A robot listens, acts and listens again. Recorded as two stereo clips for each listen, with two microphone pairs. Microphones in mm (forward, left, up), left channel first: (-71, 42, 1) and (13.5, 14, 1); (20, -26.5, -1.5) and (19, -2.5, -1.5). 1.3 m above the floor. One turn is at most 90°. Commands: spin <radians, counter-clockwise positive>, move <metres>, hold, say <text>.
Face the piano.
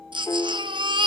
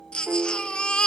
spin 1.57
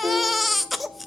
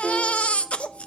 spin 0.35
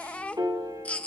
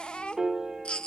spin 0.44
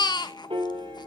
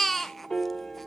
spin -0.35
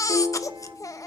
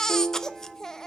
say Facing the piano, 2 to 4 m away.